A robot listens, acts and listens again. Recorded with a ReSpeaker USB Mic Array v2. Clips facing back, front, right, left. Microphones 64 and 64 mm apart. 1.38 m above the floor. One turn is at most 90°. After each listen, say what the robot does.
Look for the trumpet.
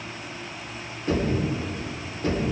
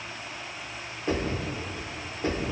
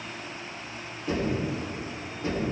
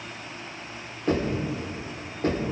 Keep listening.
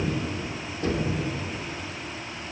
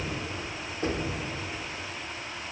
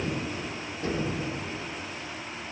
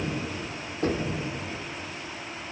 Keep listening.
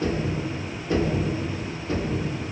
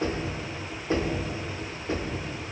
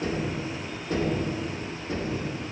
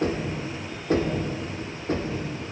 I can't make out a trumpet, only knocking.